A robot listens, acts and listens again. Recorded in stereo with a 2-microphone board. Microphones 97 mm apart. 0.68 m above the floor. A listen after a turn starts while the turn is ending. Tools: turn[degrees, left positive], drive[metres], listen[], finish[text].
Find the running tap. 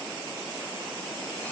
Action: listen[]
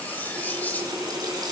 Thought: The running tap: about 45° right or 135° right.
Action: turn[-45]
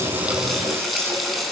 Action: finish[Found it: a running tap, straight ahead.]